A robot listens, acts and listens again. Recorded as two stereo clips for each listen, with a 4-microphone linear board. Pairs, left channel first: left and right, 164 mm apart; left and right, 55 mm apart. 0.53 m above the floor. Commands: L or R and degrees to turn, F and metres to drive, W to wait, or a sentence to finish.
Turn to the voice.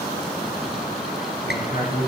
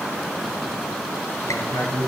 L65
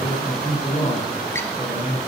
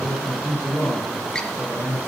L50
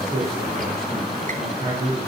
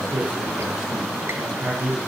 R20
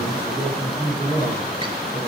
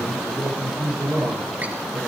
Facing the man speaking.